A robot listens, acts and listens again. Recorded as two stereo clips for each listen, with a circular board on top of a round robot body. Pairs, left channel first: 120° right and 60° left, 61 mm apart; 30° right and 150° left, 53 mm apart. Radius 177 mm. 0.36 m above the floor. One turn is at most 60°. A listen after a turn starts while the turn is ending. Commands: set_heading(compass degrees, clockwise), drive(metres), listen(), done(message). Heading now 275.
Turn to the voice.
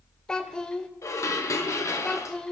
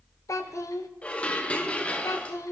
set_heading(320)
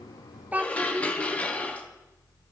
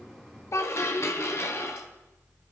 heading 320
done("Found it: a child speaking, straight ahead.")